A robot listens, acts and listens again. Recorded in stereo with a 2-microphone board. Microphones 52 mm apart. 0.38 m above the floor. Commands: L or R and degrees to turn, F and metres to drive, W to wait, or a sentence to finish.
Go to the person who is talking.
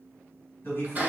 L40
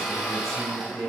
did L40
L10
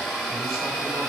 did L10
W
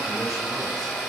W
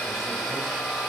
I heard a man speaking from this way, but can't make it out now. I did not reach it.